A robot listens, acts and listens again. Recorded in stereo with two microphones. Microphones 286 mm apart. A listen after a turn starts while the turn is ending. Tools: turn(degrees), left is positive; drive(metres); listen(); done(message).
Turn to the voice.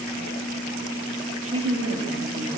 turn(degrees=-50)
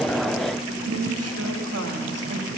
turn(degrees=-70)
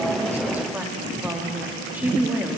done("Facing the woman speaking, 1 to 2 m away.")